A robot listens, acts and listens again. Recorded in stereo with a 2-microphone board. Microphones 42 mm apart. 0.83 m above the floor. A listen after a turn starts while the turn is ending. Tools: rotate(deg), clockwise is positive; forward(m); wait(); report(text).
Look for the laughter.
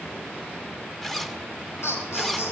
rotate(-90)
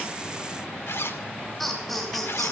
report("Facing the laughter, over 4 m away.")